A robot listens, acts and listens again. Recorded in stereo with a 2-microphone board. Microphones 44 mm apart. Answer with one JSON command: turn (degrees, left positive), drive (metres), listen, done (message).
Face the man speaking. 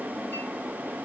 {"listen": true}
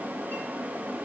{"listen": true}
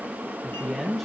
{"turn": 30}
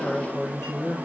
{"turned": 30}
{"turn": 145}
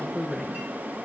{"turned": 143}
{"done": "Facing the man speaking, 1 to 2 m away."}